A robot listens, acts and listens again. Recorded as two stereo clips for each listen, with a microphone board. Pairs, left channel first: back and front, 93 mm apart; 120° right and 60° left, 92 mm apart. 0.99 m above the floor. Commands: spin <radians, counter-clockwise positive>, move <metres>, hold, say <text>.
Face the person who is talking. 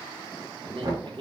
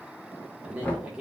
spin -0.26
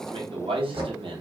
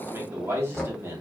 say Facing the man speaking.